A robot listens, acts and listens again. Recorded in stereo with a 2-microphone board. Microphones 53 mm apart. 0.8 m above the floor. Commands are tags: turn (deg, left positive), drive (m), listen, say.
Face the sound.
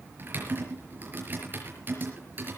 <turn deg="-40"/>
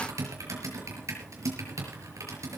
<turn deg="-100"/>
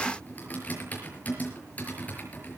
<turn deg="30"/>
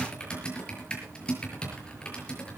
<turn deg="20"/>
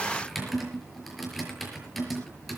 <say>Found it: typing on a keyboard, straight ahead.</say>